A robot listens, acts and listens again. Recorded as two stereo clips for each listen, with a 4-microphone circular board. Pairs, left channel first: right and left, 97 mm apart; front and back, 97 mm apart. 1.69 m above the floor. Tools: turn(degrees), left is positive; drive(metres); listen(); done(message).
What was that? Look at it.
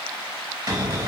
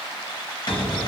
turn(degrees=40)
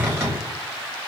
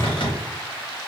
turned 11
turn(degrees=25)
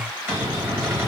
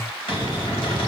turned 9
turn(degrees=20)
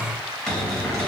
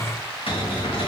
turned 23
done("Found it: a cupboard door, straight ahead.")